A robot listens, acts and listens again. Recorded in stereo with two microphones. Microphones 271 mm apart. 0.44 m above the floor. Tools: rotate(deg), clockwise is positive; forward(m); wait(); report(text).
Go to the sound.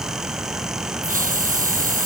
rotate(30)
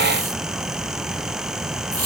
rotate(120)
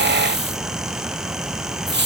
rotate(40)
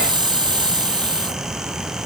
rotate(15)
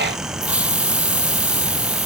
forward(1.0)
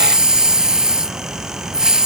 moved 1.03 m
forward(1.0)
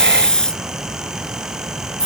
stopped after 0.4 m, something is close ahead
report("Arrived at the hiss, straight ahead.")